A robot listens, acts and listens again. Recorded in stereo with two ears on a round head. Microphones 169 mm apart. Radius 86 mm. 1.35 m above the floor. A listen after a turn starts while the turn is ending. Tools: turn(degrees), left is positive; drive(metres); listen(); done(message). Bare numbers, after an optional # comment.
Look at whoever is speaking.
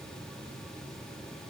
listen()
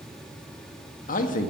# The man speaking: about 50° left or 130° left.
turn(50)
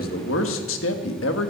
# So it is at 80° left.
turn(80)
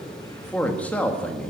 # The man speaking is now 10° left.
turn(10)
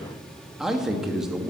done("Found it: a man speaking, straight ahead, 1 to 2 m away.")